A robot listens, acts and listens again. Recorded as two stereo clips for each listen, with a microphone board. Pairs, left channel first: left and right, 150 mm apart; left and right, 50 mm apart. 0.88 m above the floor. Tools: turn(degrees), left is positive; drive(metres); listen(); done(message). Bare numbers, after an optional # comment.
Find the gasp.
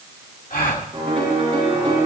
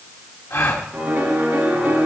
# The gasp: about 65° left or 115° left.
turn(65)
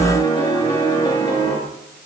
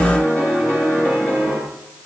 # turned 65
listen()
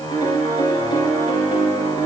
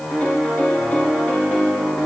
done("I heard a gasp, but can't make it out now. It was about straight ahead or 50° left.")